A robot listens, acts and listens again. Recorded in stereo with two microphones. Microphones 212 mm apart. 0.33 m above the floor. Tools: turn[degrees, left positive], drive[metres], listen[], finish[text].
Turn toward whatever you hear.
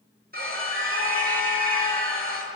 Thought: The scream: about 45° right or 135° right.
Action: turn[-45]
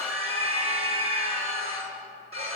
Thought: So it is at 90° right.
Action: turn[-90]
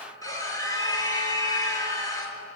Thought: The scream is now 15° left.
Action: turn[15]
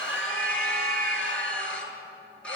Action: finish[Found it: a scream, straight ahead, over 4 m away.]